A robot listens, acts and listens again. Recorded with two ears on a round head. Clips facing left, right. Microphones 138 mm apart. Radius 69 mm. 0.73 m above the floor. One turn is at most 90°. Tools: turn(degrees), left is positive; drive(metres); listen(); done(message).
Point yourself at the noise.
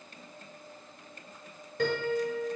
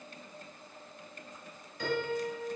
turn(degrees=45)
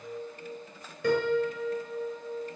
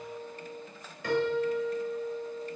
turn(degrees=85)
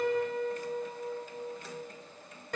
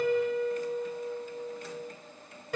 done("Found it: a piano, straight ahead, over 4 m away.")